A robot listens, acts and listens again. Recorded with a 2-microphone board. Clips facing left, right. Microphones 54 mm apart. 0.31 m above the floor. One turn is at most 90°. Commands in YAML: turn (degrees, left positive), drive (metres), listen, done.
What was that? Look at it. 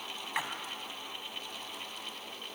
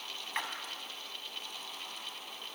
turn: 30
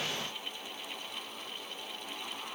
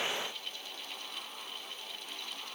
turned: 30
listen: true
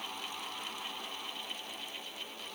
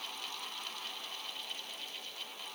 done: "I heard a splash, but can't make it out now. It was about 20° right or 140° left."